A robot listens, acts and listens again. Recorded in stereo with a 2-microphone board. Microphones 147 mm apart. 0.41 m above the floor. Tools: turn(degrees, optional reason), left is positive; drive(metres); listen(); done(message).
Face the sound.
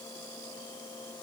listen()
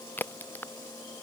turn(degrees=30)
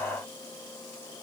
listen()
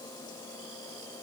done("I heard a crack, but can't make it out now. It was about 15° right or 135° left.")